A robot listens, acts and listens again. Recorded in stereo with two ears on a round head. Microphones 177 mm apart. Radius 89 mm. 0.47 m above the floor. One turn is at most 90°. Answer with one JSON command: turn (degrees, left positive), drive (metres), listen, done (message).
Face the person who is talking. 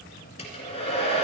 {"listen": true}
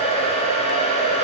{"listen": true}
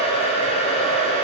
{"done": "I can't make out anyone speaking to turn to."}